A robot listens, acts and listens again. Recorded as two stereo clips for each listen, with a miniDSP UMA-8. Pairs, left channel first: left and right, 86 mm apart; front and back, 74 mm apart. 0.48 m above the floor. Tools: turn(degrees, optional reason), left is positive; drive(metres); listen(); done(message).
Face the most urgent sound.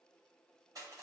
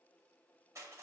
listen()
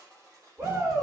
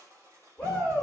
turn(degrees=-65, reason="The shout: 65° right.")
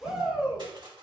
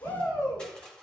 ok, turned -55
turn(degrees=-10, reason="The shout is now 10° right.")
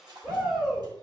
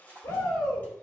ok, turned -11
done("Facing the shout.")